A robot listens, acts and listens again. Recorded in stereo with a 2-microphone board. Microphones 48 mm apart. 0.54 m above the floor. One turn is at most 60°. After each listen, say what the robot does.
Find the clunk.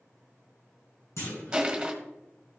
Turn 60° left.
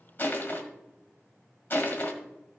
Turn 30° left.
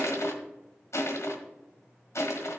Facing where the clunk came from. I can't hear it now.